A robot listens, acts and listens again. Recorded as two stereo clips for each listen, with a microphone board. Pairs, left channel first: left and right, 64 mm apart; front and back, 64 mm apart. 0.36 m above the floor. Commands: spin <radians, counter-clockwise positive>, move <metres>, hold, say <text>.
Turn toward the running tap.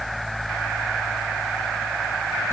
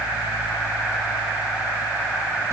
hold
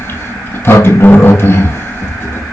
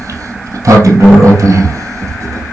hold
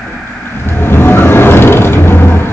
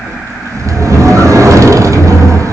say I can't make out a running tap to turn to.